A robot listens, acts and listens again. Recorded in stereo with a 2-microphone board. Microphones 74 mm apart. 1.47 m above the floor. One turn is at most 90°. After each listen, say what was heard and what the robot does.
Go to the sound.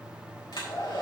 Turn 90° left.
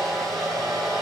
Drive 1.0 m forward.
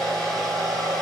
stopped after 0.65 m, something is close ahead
Something is in my way. I am facing the hair dryer but have not reached it.